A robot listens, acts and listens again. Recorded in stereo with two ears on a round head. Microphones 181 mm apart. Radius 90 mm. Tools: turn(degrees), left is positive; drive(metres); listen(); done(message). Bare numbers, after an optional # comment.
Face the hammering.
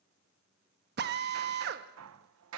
turn(-90)
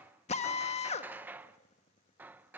# So it is at 10° right.
turn(-10)
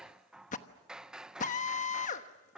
done("Facing the hammering, under 1 m away.")